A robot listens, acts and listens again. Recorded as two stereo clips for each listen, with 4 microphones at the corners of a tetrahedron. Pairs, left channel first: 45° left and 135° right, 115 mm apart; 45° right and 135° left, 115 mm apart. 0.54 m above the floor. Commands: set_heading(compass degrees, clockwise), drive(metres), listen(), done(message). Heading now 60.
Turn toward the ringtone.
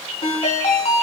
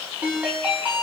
set_heading(0)
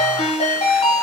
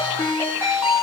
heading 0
set_heading(340)
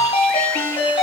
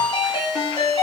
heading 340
set_heading(330)
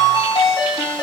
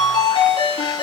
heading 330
done("Found it: a ringtone, straight ahead, 2 to 4 m away.")